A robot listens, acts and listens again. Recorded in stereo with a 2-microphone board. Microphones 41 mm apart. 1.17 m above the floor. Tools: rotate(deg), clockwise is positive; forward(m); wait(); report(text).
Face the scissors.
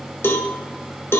wait()
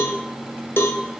wait()
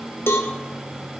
report("I can't make out scissors, only a cowbell.")